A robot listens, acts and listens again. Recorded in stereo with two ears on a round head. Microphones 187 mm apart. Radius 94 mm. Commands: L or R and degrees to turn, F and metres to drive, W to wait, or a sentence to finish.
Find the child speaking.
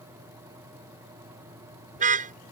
W
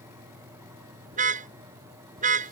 W
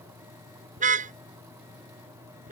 I can't make out a child speaking to turn to.